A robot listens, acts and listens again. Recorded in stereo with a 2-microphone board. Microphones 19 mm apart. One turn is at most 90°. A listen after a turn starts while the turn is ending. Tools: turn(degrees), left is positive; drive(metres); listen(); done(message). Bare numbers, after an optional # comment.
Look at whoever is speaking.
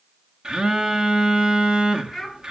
# The child speaking: about 20° left or 160° left.
turn(20)
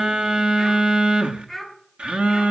done("Facing the child speaking.")